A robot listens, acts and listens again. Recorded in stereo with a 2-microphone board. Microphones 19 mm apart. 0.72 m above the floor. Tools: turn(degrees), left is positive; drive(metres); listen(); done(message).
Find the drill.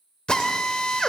turn(degrees=55)
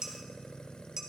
listen()
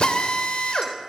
turn(degrees=65)
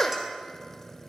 turn(degrees=20)
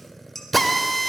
done("Facing the drill.")